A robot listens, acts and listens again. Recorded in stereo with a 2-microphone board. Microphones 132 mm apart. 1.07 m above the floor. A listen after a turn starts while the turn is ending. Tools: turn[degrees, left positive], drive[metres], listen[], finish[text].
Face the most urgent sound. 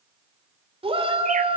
Thought: The shout: about 45° right or 135° right.
Action: turn[-45]
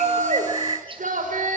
Thought: So it is at 90° right.
Action: turn[-90]
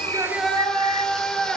Action: finish[Found it: a shout, straight ahead, 2 to 4 m away.]